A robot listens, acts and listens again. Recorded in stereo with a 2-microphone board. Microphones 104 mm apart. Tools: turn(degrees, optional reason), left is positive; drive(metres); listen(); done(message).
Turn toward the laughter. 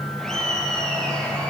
turn(degrees=30)
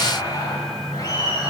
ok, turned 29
turn(degrees=140, reason="So it is at 140° left.")
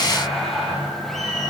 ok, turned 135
done("Found it: laughter, straight ahead.")